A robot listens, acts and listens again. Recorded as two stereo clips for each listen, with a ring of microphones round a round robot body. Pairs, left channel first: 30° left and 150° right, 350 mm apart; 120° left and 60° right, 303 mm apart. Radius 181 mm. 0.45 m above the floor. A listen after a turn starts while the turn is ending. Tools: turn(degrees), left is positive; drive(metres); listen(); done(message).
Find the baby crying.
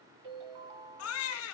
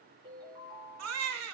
turn(degrees=-20)
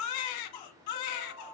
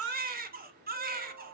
done("Facing the baby crying, 1 to 2 m away.")